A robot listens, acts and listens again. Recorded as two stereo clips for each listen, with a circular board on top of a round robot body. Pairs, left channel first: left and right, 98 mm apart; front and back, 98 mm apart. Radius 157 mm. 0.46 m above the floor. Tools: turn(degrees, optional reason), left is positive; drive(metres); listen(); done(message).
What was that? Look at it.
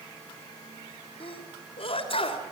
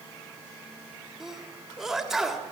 turn(degrees=95, reason="The sneeze: 95° left.")
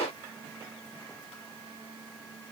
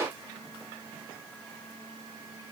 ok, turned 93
done("Facing where the sneeze came from. I can't hear it now.")